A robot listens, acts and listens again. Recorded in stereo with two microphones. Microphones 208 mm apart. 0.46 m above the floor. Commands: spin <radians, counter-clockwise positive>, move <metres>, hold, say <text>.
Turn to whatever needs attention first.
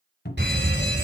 spin -1.05
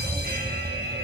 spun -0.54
spin -1.05
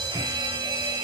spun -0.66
spin -0.44
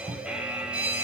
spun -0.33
say Facing the fire alarm.